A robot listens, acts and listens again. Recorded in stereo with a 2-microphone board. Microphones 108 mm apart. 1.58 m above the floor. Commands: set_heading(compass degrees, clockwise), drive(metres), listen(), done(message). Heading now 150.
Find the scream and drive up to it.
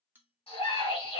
set_heading(85)
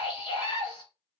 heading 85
set_heading(40)
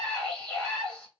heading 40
drive(1.0)
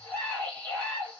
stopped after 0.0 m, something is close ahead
set_heading(30)
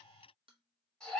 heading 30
done("Blocked. The scream is further on, straight ahead.")